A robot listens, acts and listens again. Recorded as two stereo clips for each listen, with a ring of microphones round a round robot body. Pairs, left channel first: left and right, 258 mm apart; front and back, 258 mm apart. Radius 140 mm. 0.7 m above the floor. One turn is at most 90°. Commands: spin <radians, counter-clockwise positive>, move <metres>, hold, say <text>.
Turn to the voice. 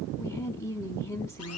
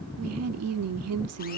spin 1.57
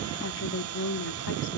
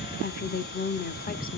spin 0.96
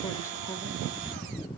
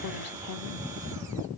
spin 0.17
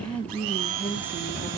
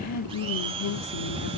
say Found it: a woman speaking, straight ahead.